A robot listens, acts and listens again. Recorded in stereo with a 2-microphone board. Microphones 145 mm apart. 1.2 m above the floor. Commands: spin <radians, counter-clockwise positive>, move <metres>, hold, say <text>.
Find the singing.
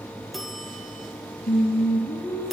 spin 1.22
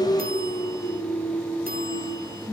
spin -0.26
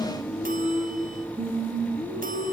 spin -0.26
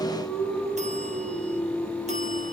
say Found it: singing, straight ahead.